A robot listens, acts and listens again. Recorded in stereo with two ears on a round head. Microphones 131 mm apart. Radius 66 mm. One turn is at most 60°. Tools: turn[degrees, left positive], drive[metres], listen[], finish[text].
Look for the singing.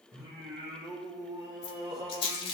Thought: The singing: about 30° right or 150° right.
Action: turn[-30]
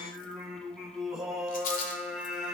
Thought: So it is at 10° right.
Action: turn[-10]
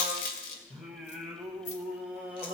Thought: The singing is now 10° right.
Action: turn[-10]
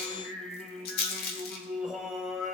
Action: finish[Found it: singing, straight ahead, 1 to 2 m away.]